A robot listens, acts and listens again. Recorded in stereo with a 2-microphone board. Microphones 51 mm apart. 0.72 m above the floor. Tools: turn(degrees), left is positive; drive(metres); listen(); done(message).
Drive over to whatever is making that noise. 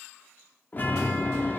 turn(degrees=35)
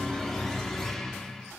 turn(degrees=10)
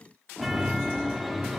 drive(metres=1.0)
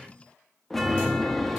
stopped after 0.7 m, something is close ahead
done("I am next to the chime.")